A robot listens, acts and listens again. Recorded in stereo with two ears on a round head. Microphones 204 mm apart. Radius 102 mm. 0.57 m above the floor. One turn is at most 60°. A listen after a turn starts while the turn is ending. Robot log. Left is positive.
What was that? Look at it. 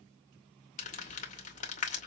note: The crumpling: about 35° left or 145° left.
cmd yaw +35
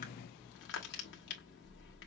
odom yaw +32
note: So it is at 105° left.
cmd yaw +60
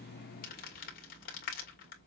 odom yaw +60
note: The crumpling is now 45° left.
cmd yaw +45
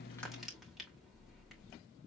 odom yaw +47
end: Facing the crumpling.